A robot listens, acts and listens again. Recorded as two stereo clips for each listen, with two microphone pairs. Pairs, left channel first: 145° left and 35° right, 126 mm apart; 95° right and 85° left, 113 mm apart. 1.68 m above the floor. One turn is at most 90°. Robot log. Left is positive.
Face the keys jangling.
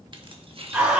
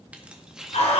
end: Facing the keys jangling.